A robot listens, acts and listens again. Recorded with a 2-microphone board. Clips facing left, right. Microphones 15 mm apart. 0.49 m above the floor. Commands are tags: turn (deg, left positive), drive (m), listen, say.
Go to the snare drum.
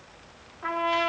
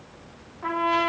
<listen/>
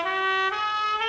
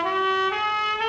<listen/>
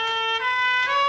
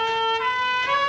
<say>I can't make out a snare drum, only a trumpet.</say>